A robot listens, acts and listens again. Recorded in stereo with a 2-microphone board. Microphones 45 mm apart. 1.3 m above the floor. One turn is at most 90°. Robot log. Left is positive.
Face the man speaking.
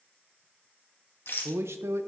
cmd yaw -90
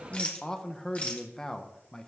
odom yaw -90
note: So it is at 15° left.
cmd yaw +15
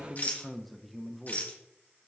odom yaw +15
end: Facing the man speaking, under 1 m away.